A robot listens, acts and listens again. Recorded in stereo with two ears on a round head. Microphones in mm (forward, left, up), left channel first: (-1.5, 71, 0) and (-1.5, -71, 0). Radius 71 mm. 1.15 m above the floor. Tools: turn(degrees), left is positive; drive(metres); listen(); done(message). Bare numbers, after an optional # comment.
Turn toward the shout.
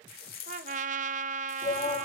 # The shout: about 35° left or 145° left.
turn(35)
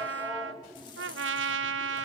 done("Found it: a shout, straight ahead.")